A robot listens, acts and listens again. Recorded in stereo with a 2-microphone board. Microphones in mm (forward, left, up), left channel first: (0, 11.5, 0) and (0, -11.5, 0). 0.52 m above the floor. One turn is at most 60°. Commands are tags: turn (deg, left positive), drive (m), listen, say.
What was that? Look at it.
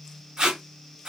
<turn deg="-40"/>
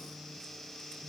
<listen/>
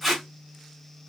<say>Facing the tape being pulled.</say>